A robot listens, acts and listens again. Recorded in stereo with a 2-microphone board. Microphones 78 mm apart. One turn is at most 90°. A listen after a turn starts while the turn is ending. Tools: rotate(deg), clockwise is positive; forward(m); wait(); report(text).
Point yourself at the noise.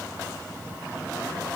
wait()
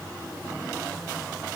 wait()
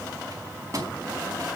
rotate(45)
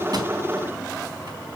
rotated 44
wait()
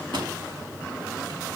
rotate(90)
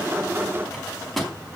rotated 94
report("Found it: a microwave, straight ahead, over 4 m away.")